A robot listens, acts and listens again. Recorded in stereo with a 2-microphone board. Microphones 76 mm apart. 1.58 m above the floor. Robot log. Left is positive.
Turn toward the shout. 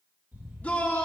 note: The shout: about 15° left or 165° left.
cmd yaw +15
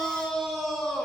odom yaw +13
end: Found it: a shout, straight ahead, 2 to 4 m away.